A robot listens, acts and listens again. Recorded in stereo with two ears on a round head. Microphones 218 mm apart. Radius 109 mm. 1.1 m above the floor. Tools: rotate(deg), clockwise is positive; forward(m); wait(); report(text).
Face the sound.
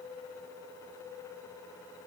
wait()
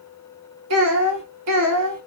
rotate(70)
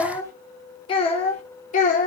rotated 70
rotate(-35)
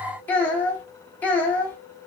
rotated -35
report("Facing the child speaking, 1 to 2 m away.")